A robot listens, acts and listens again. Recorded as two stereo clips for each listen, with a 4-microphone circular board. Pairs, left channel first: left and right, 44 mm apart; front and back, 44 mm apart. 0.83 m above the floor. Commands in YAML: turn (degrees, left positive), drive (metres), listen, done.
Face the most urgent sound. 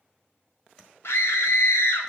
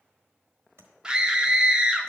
turn: 105
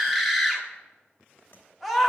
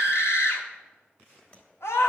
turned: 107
done: "Found it: a scream, straight ahead, 1 to 2 m away."